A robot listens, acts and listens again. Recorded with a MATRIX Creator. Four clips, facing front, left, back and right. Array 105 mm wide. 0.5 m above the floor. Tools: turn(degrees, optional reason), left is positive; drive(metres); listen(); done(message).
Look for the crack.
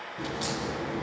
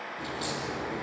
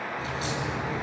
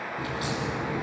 turn(degrees=-35, reason="The crack: 35° right.")
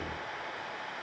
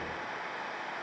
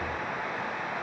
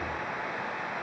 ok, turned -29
done("I heard a crack from this way, but can't make it out now.")